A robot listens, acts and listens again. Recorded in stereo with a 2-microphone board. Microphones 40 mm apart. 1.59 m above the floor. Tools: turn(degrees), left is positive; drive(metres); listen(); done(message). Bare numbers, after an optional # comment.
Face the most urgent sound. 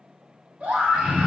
# The scream: about 35° right or 145° right.
turn(-35)
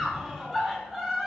done("Facing the scream, 2 to 4 m away.")